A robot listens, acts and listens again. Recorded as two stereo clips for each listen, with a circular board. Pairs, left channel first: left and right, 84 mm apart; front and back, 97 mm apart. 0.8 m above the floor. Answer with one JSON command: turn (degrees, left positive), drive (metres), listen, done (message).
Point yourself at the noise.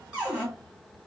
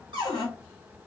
{"turn": -170}
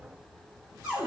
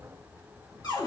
{"turn": -20}
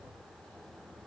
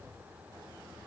{"listen": true}
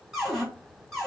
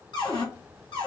{"done": "Facing the cupboard door."}